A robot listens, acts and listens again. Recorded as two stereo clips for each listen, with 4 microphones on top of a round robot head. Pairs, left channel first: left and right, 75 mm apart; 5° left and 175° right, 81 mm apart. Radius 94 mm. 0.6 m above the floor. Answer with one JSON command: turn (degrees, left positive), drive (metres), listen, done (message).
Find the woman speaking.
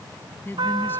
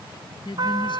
{"turn": 30}
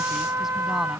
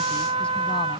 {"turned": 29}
{"listen": true}
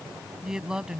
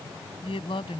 {"turn": -10}
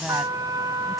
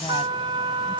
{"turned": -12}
{"listen": true}
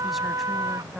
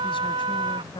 {"done": "Facing the woman speaking."}